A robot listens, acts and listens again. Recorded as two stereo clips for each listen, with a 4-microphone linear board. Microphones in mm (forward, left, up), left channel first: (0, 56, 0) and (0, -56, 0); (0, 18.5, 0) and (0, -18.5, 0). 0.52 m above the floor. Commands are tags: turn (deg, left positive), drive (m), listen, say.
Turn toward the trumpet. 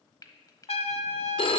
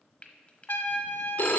<turn deg="65"/>
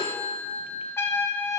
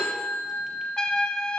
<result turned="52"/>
<turn deg="25"/>
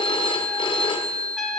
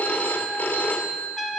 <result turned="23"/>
<say>Facing the trumpet, under 1 m away.</say>